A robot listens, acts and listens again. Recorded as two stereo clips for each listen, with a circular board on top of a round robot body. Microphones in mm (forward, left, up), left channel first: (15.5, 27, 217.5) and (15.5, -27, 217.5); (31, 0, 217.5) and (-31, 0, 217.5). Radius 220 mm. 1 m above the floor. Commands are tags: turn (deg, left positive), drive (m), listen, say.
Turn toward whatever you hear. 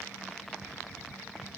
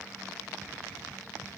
<listen/>
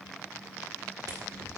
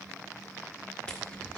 <listen/>
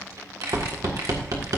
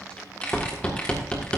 <turn deg="-70"/>
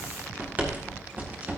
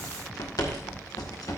<turn deg="-30"/>
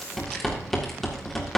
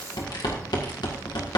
<say>Facing the rattle.</say>